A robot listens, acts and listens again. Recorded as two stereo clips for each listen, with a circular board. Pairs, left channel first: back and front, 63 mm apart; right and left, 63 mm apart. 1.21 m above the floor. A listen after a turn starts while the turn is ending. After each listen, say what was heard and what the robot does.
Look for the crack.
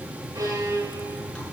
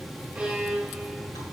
Keep listening.
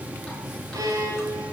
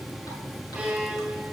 Keep listening.
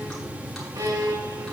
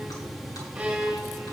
I can't make out a crack to turn to.